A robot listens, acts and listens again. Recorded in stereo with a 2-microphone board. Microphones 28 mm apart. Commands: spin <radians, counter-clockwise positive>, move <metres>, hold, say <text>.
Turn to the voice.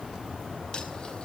hold
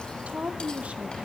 spin -0.96
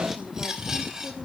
hold
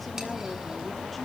hold
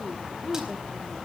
say Found it: a woman speaking, straight ahead, 2 to 4 m away.